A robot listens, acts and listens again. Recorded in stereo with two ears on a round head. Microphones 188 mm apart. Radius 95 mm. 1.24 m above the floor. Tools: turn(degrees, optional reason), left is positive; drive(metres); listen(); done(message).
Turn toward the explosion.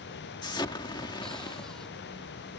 turn(degrees=20, reason="The explosion: about 20° left or 160° left.")
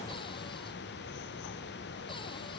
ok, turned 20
listen()
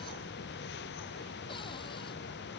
done("I heard an explosion, but can't make it out now. It was about straight ahead or 140° left.")